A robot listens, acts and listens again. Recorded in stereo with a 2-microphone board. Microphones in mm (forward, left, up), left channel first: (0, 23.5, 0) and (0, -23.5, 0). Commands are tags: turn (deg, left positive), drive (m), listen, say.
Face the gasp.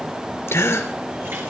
<turn deg="65"/>
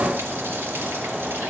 <listen/>
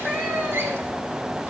<say>I heard a gasp, but can't make it out now. It was about straight ahead or 50° left.</say>